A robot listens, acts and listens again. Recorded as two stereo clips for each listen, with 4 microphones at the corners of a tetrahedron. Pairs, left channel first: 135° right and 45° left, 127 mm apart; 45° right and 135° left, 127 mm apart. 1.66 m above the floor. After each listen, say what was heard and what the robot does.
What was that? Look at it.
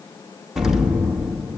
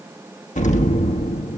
The explosion: 40° right. Turn 40° right.
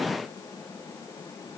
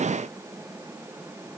Facing where the explosion came from. I can't hear it now.